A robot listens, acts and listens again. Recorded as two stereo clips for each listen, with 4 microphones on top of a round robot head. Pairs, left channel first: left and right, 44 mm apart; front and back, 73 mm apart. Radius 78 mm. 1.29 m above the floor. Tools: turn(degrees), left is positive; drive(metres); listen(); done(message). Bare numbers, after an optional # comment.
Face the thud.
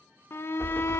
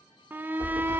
# The thud: 155° left.
turn(155)
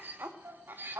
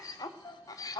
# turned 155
done("I heard a thud from this way, but can't make it out now.")